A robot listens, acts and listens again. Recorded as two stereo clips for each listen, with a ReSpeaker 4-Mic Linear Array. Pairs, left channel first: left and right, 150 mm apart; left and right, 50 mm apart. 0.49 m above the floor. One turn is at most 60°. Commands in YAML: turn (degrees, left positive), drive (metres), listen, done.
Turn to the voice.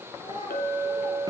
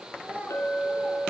turn: -30
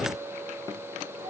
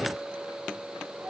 listen: true
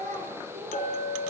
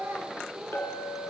turn: -60
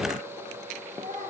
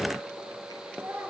turn: -60
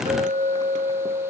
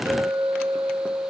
listen: true
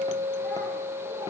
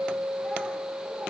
listen: true
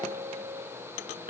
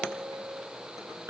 done: "Facing where the child speaking came from. I can't hear it now."